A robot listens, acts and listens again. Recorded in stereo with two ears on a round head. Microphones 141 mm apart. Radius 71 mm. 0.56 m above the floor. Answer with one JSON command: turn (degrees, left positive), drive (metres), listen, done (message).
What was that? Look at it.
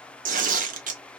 {"turn": -55}
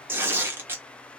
{"turn": -15}
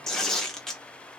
{"done": "Found it: tearing paper, straight ahead, under 1 m away."}